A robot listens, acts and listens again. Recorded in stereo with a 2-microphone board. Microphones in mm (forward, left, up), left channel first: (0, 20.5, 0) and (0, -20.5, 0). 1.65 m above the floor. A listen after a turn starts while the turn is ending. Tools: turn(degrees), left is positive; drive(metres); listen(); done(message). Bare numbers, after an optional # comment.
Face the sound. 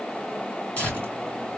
# The tearing paper: about 35° left or 145° left.
turn(35)
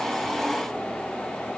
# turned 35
listen()
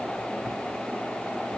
listen()
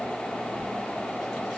done("I heard tearing paper, but can't make it out now. It was about straight ahead or 110° left.")